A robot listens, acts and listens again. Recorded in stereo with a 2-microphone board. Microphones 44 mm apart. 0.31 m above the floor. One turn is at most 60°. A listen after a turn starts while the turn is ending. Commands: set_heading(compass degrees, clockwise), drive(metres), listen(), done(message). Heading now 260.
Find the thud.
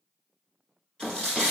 set_heading(275)
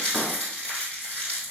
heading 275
listen()
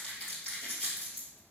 done("I heard a thud, but can't make it out now. It was about straight ahead or 150° right.")